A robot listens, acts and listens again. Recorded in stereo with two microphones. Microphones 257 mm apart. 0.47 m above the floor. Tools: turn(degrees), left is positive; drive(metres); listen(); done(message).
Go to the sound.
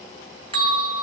turn(degrees=-20)
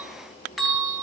drive(metres=1.0)
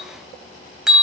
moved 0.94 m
drive(metres=1.0)
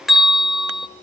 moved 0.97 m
drive(metres=1.0)
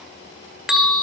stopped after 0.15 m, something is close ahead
done("Arrived at the bell, straight ahead.")